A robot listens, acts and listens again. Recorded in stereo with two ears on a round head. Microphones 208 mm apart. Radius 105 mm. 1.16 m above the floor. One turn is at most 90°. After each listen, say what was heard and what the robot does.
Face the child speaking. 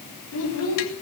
The child speaking: about 70° left or 110° left. Turn 70° left.
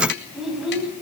Facing the child speaking, over 4 m away.